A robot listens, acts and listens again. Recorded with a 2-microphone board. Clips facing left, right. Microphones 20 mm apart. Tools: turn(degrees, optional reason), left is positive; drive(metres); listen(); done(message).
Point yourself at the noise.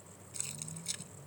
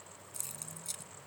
turn(degrees=25, reason="The keys jangling: about 25° left or 155° left.")
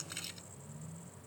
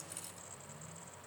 turn(degrees=135, reason="So it is at 135° left.")
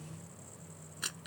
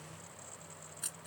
turn(degrees=40, reason="The keys jangling is now 40° left.")
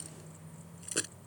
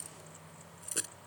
turn(degrees=20, reason="The keys jangling is now 20° left.")
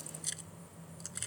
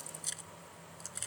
done("Found it: keys jangling, straight ahead.")